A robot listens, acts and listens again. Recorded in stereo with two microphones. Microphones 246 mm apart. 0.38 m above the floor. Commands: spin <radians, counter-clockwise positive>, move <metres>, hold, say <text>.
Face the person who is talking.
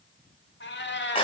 hold
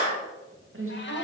spin -0.96
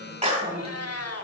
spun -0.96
spin -0.87
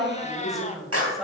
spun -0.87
say Found it: a woman speaking, straight ahead, 1 to 2 m away.